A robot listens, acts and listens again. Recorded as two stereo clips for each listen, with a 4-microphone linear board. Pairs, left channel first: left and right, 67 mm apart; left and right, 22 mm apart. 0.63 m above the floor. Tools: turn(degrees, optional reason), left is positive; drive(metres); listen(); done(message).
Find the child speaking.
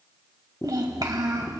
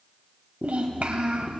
turn(degrees=-90)
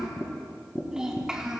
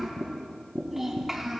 turn(degrees=-15, reason="So it is at 15° right.")
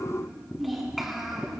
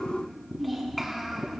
done("Found it: a child speaking, straight ahead.")